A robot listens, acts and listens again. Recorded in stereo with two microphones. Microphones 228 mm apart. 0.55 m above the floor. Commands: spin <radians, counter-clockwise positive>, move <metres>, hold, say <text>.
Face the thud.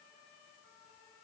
hold
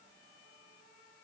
hold
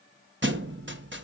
spin -0.96
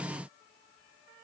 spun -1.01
hold
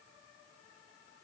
say I heard a thud, but can't make it out now. It was about 5° left or 70° right.